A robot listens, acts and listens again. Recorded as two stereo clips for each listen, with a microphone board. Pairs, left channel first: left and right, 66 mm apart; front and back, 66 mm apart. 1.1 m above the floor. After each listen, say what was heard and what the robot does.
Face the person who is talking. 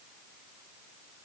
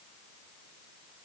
Keep listening.
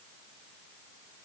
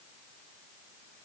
Keep listening.
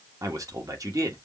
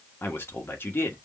The man speaking: 55° right. Turn 55° right.
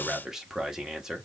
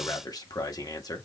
The man speaking is now 10° right. Turn 10° right.
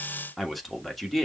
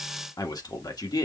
Facing the man speaking.